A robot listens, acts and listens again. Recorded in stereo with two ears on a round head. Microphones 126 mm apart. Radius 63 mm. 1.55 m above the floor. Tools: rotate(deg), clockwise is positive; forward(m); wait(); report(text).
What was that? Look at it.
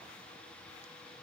wait()
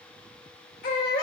rotate(-65)
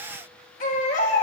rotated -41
rotate(-65)
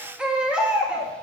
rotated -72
rotate(10)
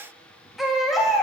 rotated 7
report("Facing the baby crying.")